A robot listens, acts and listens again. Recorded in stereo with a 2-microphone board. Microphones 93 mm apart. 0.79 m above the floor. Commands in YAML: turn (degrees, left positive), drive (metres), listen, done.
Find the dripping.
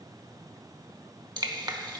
turn: -50
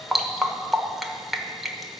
done: "Facing the dripping, 1 to 2 m away."